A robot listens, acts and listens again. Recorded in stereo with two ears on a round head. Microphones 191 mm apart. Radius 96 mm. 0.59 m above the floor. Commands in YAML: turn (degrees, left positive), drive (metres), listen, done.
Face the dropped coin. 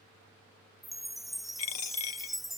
turn: 90
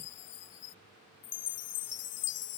done: "I heard a dropped coin from this way, but can't make it out now."